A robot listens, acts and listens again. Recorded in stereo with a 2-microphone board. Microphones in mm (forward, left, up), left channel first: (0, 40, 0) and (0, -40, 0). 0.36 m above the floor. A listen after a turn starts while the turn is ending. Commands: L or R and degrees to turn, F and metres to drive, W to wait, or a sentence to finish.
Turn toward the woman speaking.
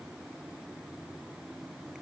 W
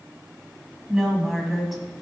L30
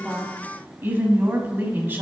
R30
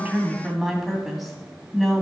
Facing the woman speaking, 2 to 4 m away.